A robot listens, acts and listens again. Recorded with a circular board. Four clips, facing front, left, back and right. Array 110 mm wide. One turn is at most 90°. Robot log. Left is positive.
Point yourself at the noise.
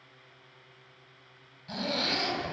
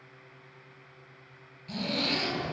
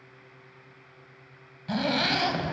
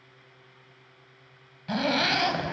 note: The zipper: 115° right.
cmd yaw -90
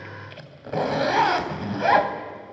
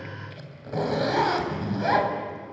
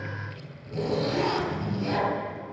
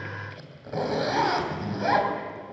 end: Facing the zipper, 2 to 4 m away.